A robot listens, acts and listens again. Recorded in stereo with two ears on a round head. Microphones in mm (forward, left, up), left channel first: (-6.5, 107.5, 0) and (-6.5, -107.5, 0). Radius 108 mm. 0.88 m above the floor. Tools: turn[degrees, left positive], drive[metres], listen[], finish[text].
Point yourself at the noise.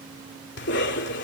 Thought: The cough: about 50° left or 130° left.
Action: turn[50]
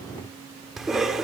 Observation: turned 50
Action: finish[Facing the cough.]